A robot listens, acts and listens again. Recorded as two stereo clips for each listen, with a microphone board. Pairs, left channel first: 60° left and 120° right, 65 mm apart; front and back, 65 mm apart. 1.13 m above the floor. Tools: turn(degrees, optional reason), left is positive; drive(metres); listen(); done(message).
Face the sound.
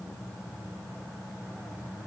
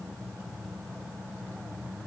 listen()
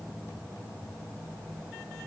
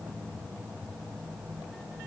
listen()
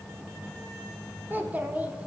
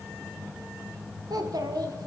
turn(degrees=170, reason="The child speaking: 170° left.")
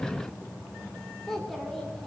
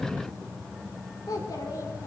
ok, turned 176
turn(degrees=-25, reason="The child speaking is now 25° right.")
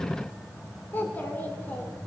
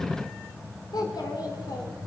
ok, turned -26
done("Facing the child speaking.")